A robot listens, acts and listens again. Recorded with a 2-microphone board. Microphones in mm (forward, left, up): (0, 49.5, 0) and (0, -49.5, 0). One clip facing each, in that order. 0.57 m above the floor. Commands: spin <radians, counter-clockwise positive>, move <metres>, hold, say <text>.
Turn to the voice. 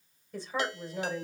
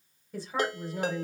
spin -0.52
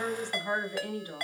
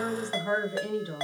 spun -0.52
spin -2.62
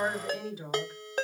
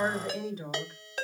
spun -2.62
say Found it: a woman speaking, straight ahead.